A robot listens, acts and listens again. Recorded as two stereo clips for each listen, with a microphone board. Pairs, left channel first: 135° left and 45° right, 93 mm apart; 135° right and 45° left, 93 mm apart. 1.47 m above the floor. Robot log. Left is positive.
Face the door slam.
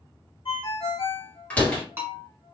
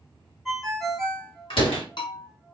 note: The door slam: 150° right.
cmd yaw -150
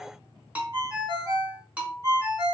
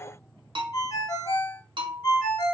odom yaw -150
end: Facing where the door slam came from. I can't hear it now.